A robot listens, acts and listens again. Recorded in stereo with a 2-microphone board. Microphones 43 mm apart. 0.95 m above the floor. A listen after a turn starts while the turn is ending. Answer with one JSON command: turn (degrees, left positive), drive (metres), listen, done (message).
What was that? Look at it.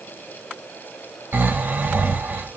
{"turn": -50}
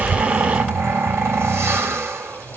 {"turn": -80}
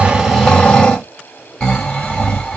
{"turn": 15}
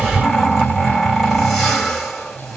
{"done": "Found it: snoring, straight ahead."}